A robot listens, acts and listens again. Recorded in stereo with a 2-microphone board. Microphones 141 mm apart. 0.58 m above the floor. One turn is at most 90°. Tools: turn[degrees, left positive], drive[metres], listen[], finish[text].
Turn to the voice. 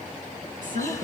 Thought: The woman speaking: about 75° right or 105° right.
Action: turn[-75]
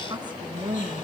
Thought: So it is at 30° right.
Action: turn[-30]
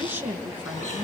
Thought: The woman speaking is now 15° right.
Action: turn[-15]
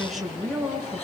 Action: finish[Facing the woman speaking, over 4 m away.]